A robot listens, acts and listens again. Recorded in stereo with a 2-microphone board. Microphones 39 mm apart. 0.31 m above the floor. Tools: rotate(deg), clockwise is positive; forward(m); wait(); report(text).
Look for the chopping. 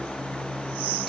wait()
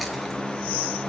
wait()
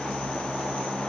report("I can't make out chopping.")